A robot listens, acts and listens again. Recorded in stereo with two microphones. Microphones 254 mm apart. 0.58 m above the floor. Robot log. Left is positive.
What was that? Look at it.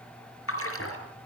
note: The splash: about 60° left or 120° left.
cmd yaw +60
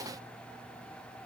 cmd idle
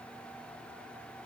end: I heard a splash, but can't make it out now. It was about straight ahead or 60° left.